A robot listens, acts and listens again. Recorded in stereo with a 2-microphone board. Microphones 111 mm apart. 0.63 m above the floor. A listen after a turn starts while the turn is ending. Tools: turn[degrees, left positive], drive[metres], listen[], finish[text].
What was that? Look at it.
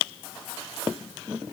Action: listen[]
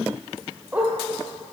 Action: turn[-30]
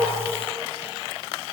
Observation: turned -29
Action: listen[]
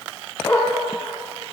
Thought: So it is at 20° left.
Action: turn[20]
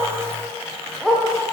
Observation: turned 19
Action: finish[Found it: a dog barking, straight ahead.]